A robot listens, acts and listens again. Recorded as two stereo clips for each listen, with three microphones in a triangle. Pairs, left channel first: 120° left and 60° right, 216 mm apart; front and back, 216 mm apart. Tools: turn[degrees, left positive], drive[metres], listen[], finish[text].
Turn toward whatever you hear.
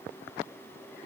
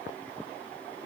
Action: listen[]
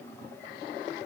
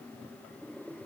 Action: listen[]
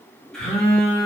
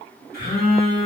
Thought: The phone buzzing: 35° left.
Action: turn[35]
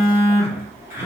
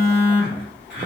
Thought: The phone buzzing is now 15° left.
Action: turn[15]
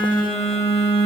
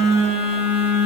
Action: finish[Found it: a phone buzzing, straight ahead.]